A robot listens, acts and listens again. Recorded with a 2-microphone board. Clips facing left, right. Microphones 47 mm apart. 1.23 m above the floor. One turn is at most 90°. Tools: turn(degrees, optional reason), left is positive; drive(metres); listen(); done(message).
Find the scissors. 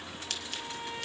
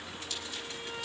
turn(degrees=65, reason="The scissors: about 65° left or 115° left.")
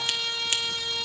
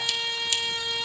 turn(degrees=40, reason="So it is at 40° left.")
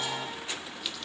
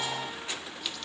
done("Found it: scissors, straight ahead, 1 to 2 m away.")